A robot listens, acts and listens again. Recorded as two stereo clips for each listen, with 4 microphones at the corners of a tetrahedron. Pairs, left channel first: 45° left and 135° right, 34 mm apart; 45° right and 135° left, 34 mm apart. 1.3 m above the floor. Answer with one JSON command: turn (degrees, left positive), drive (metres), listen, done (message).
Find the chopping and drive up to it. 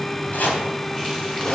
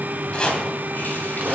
{"turn": 15}
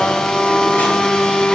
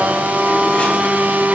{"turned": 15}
{"listen": true}
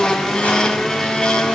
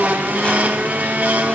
{"listen": true}
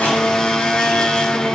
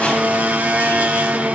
{"done": "I heard chopping from this way, but can't make it out now. I did not reach it."}